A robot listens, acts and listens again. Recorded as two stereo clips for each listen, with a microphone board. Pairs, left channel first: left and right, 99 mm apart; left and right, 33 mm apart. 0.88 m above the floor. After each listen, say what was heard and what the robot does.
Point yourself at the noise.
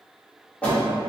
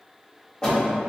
Turn 30° left.
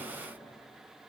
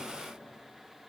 Keep listening.
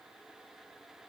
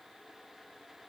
I heard a door slam, but can't make it out now. It was about 20° right or 140° left.